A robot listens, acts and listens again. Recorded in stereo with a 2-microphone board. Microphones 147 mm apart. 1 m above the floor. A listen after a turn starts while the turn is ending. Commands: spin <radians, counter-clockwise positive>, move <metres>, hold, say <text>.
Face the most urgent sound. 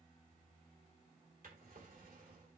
hold
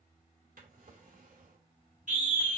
spin -1.05
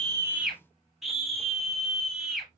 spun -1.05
say Found it: a scream, straight ahead, 2 to 4 m away.